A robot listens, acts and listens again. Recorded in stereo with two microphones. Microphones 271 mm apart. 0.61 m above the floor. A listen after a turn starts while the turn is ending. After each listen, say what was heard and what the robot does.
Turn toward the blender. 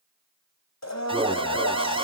Turn 90° left.
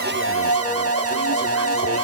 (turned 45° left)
So it is at 35° left. Turn 35° left.
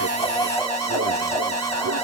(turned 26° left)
The blender is now 10° left. Turn 10° left.
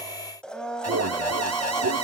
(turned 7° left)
Facing the blender, 2 to 4 m away.